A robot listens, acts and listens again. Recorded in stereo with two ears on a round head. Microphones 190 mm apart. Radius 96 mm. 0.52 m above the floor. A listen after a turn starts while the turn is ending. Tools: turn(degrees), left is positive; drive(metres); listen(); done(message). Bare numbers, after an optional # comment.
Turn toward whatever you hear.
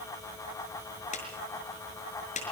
# The clap: about 35° left or 145° left.
turn(35)
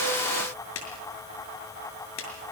# So it is at 110° left.
turn(110)
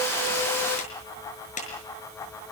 # The clap is now 35° left.
turn(35)
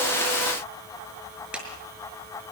done("Facing the clap, over 4 m away.")